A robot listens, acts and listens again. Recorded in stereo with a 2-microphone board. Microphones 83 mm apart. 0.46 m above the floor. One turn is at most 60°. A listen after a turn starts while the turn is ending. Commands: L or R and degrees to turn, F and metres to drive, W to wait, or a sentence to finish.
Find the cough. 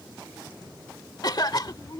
L55
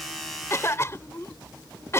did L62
L40
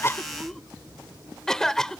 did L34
Found it: a cough, straight ahead.